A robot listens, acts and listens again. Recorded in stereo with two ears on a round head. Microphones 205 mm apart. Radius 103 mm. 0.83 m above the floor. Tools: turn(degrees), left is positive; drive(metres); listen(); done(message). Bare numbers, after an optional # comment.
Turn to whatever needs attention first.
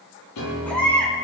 turn(30)
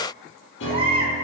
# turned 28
# So it is at 25° right.
turn(-25)
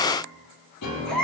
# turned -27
done("Facing the baby crying.")